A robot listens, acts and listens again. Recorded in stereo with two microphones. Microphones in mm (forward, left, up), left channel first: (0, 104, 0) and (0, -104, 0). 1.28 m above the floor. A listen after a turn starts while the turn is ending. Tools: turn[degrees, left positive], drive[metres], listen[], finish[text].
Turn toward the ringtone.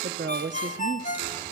Thought: The ringtone: about 40° left or 140° left.
Action: turn[40]
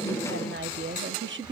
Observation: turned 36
Action: listen[]
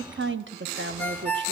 Thought: So it is at 10° left.
Action: turn[10]
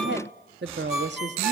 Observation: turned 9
Action: finish[Found it: a ringtone, straight ahead, 1 to 2 m away.]